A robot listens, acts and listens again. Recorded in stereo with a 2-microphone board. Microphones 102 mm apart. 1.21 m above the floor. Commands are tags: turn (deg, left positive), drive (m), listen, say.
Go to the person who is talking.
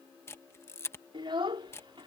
<turn deg="-55"/>
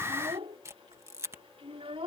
<turn deg="-70"/>
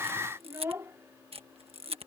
<turn deg="-25"/>
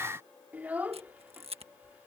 <turn deg="-15"/>
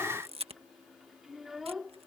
<drive m="1.0"/>
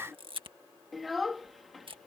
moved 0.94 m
<drive m="1.0"/>
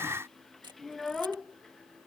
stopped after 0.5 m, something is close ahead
<say>Arrived at the child speaking, straight ahead.</say>